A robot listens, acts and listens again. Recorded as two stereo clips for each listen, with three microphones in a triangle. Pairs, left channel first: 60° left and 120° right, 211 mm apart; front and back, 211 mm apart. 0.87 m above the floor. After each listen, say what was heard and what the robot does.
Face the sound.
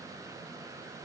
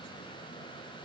Keep listening.
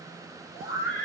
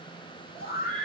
The scream: 40° left. Turn 40° left.
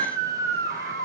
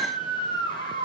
Found it: a scream, straight ahead.